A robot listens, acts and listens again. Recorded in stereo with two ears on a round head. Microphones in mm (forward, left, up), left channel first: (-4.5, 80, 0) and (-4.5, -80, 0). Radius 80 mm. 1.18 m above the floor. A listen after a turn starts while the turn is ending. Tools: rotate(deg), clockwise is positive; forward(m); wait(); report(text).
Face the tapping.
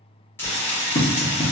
rotate(-40)
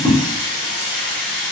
wait()
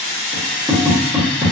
report("Found it: tapping, straight ahead, 1 to 2 m away.")